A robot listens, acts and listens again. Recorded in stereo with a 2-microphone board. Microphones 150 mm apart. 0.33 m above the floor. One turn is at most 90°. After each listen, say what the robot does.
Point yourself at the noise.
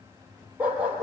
Turn 30° right.
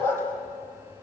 Turn 15° left.
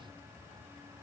Keep listening.
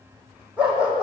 Turn 10° right.
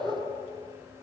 Facing the dog barking, over 4 m away.